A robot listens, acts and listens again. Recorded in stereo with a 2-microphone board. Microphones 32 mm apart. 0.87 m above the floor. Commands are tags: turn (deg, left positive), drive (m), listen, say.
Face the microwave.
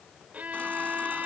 <listen/>
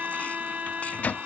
<turn deg="55"/>
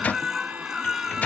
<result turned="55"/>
<turn deg="60"/>
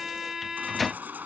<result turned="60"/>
<say>Facing the microwave.</say>